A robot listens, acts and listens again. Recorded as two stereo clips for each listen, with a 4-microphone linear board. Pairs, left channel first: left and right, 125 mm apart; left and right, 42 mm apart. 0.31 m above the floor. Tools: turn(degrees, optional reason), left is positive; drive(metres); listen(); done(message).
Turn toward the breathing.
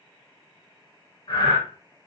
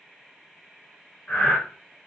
turn(degrees=35, reason="The breathing: about 35° left or 145° left.")
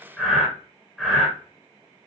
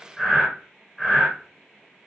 done("Facing the breathing.")